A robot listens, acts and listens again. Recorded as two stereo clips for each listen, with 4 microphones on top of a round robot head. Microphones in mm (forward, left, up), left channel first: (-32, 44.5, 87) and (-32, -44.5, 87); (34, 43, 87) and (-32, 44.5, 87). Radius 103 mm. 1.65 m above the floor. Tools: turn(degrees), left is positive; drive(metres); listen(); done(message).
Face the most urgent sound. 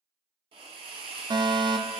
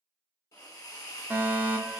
turn(degrees=-120)
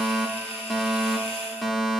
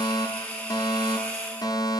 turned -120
done("Found it: a fire alarm, straight ahead, under 1 m away.")